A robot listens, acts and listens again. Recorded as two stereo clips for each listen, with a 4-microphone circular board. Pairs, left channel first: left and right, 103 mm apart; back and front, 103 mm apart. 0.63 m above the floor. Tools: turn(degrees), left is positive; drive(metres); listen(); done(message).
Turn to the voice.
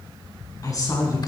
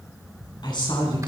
turn(degrees=140)
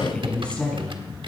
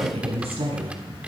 turn(degrees=10)
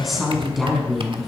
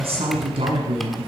done("Found it: a woman speaking, straight ahead.")